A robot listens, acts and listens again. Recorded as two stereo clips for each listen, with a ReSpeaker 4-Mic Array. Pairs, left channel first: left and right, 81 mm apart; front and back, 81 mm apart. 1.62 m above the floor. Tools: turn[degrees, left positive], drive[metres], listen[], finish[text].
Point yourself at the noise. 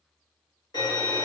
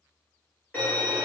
Thought: The violin: 70° left.
Action: turn[70]
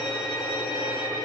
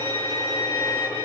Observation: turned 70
Thought: The violin is now 15° right.
Action: turn[-15]
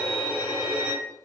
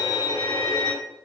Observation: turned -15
Action: finish[Found it: a violin, straight ahead, 1 to 2 m away.]